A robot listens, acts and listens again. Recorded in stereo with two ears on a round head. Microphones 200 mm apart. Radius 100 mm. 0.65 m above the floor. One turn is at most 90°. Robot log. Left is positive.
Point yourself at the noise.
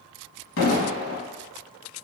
note: The explosion: about 65° left or 115° left.
cmd yaw +65
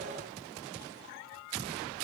cmd idle
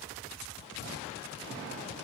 end: I heard an explosion, but can't make it out now. It was about straight ahead or 50° left.